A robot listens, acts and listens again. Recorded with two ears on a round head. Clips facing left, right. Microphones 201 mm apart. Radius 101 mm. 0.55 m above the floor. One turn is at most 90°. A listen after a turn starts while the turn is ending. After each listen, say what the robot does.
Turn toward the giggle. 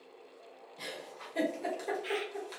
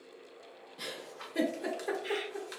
Turn 15° right.
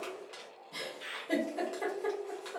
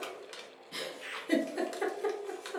Turn 90° right.
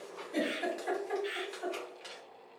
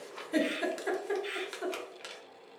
Turn 65° right.
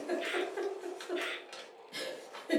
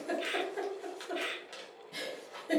Found it: a giggle, straight ahead, under 1 m away.